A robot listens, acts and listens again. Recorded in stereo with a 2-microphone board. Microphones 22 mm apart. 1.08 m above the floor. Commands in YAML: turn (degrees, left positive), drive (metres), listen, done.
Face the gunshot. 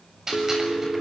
turn: -20
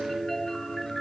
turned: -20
listen: true
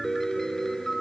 done: "I heard a gunshot, but can't make it out now. It was about straight ahead or 140° right."